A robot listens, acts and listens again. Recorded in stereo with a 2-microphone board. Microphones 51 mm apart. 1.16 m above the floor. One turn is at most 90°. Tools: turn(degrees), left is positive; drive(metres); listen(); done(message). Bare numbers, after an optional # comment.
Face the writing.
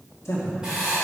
# The writing: about 20° right or 160° right.
turn(-20)
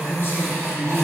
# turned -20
listen()
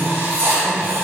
# So it is at 140° right.
turn(-90)
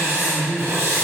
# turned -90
# The writing is now 50° right.
turn(-50)
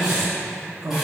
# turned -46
done("Facing the writing.")